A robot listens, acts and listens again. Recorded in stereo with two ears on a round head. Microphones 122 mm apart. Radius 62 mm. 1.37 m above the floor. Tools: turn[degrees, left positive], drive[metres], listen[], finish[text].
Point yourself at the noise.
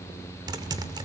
Thought: The typing on a keyboard: about 30° right or 150° right.
Action: turn[-30]
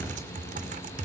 Thought: So it is at 120° right.
Action: turn[-120]
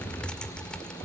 Action: finish[Facing the typing on a keyboard.]